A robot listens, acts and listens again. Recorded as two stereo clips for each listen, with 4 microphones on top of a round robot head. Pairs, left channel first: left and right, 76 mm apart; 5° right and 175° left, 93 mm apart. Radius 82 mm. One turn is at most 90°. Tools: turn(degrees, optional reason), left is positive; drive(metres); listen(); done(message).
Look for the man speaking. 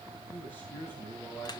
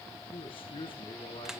turn(degrees=25, reason="The man speaking: 25° left.")
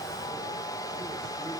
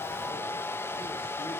listen()
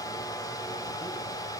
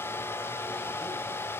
listen()
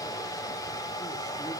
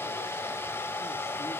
done("Facing where the man speaking came from. I can't hear it now.")